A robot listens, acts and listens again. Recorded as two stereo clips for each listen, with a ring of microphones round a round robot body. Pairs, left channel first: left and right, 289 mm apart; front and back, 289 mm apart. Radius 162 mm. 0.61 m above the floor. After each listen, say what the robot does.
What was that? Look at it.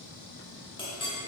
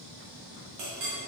Turn 165° left.
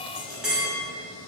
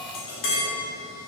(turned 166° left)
Facing the clink, 1 to 2 m away.